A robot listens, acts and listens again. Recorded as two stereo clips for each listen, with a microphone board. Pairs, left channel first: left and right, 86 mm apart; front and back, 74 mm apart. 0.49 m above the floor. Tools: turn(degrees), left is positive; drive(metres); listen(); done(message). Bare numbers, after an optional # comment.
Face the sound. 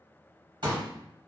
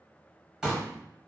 # The pop: 105° right.
turn(-105)
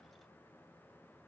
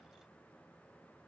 done("Facing where the pop came from. I can't hear it now.")